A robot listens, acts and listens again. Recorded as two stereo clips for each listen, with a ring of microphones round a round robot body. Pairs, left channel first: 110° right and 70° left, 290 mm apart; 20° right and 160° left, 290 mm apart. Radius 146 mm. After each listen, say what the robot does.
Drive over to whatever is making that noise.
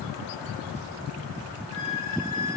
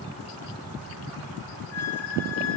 Turn 105° right.
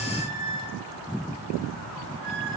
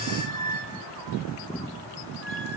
Turn 15° left.
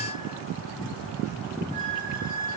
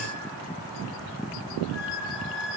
Drive 1.0 m forward.
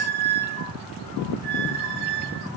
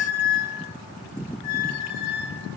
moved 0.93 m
Turn 10° left.
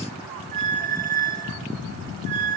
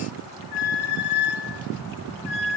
Drive 1.0 m forward.
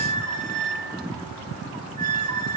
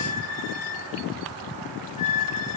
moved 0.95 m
Drive 1.0 m forward.
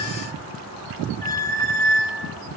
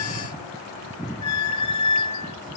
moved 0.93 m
Drive 1.0 m forward.
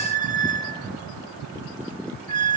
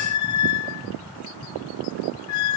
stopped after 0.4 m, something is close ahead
Arrived at the squeak, straight ahead.